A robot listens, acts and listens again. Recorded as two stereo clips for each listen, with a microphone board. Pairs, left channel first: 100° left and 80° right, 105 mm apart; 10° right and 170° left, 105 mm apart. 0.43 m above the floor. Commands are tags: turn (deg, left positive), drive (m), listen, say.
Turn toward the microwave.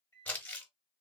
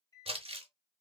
<turn deg="40"/>
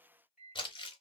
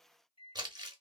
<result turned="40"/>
<say>Found it: a microwave, straight ahead.</say>